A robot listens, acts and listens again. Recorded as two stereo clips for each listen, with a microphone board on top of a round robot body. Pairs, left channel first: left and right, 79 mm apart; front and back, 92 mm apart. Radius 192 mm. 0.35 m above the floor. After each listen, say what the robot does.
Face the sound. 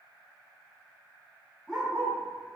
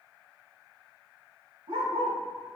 Turn 175° right.
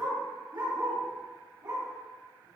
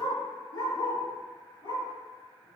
Turn 45° right.
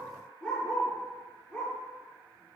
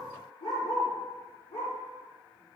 Turn 10° left.
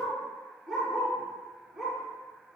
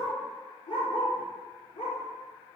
Facing the dog barking.